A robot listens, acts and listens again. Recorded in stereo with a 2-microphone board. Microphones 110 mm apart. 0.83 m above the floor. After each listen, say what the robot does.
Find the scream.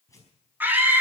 Turn 15° right.
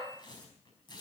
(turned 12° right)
Keep listening.
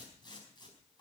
Keep listening.
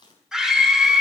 Found it: a scream, straight ahead.